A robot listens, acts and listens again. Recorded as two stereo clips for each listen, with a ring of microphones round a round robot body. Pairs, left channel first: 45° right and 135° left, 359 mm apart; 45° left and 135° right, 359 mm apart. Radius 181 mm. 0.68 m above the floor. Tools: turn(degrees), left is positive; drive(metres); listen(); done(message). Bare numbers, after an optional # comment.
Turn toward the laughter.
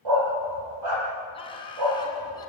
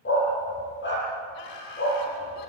# The laughter: 35° left.
turn(35)
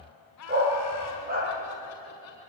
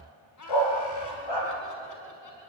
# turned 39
done("Facing the laughter.")